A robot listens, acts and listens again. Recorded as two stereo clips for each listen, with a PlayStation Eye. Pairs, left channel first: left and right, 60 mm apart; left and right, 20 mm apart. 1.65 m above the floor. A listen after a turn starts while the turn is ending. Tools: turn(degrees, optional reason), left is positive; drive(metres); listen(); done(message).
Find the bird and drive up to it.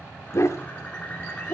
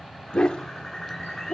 turn(degrees=20, reason="The bird: about 20° left or 160° left.")
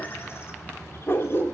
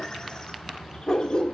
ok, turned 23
listen()
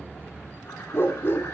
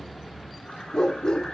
listen()
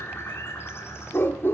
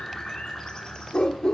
turn(degrees=135, reason="So it is at 135° left.")
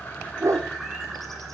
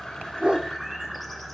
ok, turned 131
drive(metres=1.0)
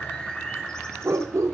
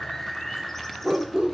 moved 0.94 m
turn(degrees=15, reason="The bird is now 15° left.")
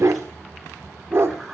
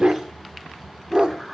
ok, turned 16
drive(metres=1.0)
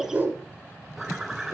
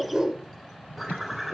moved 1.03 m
drive(metres=1.0)
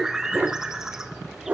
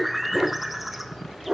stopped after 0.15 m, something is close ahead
turn(degrees=-10, reason="The bird is now 10° right.")
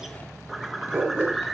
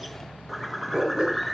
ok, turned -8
done("I am next to the bird.")